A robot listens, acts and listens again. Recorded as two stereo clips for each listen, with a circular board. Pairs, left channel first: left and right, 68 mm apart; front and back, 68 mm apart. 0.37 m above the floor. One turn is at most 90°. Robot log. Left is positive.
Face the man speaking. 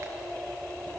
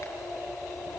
cmd idle
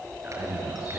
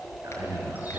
note: The man speaking: 150° right.
cmd yaw -90
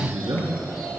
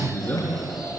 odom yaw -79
note: The man speaking is now 70° right.
cmd yaw -70
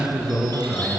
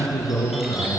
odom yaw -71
end: Facing the man speaking, over 4 m away.